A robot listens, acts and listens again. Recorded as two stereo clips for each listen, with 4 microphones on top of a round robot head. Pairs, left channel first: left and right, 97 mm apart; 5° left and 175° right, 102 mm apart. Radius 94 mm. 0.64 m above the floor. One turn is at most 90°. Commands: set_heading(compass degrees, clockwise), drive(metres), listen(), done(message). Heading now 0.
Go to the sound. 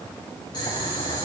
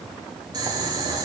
set_heading(270)
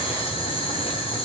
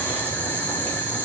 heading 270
set_heading(195)
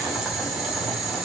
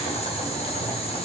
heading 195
drive(1.0)
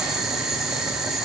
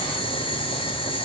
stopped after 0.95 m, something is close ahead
done("Arrived at the boiling, straight ahead.")